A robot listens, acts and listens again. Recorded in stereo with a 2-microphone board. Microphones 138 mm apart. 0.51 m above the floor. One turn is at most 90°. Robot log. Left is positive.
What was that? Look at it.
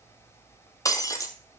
note: The breaking glass: about 25° left or 155° left.
cmd yaw +25
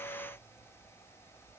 cmd idle
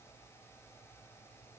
end: I heard breaking glass, but can't make it out now. It was about straight ahead or 130° left.